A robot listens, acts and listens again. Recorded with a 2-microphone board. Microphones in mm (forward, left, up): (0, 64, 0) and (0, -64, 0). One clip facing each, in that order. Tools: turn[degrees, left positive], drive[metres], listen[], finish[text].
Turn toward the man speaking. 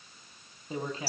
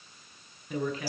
Thought: The man speaking: about 30° left or 150° left.
Action: turn[30]
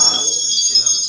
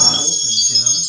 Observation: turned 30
Action: listen[]
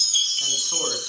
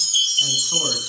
Action: listen[]
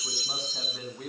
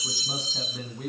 Action: finish[Facing the man speaking, over 4 m away.]